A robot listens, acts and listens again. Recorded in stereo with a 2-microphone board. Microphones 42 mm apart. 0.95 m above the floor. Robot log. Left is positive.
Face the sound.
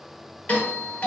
note: The doorbell: about 45° left or 135° left.
cmd yaw +45
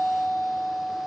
note: So it is at 80° left.
cmd yaw +80
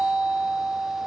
end: Facing the doorbell.